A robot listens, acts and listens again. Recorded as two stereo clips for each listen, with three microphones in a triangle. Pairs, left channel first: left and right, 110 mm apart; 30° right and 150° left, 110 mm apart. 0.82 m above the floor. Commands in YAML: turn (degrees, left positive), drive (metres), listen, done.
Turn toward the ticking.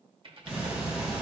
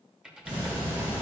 turn: -170
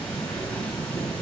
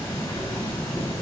turn: 10
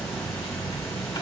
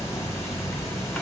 done: "Facing the ticking, 2 to 4 m away."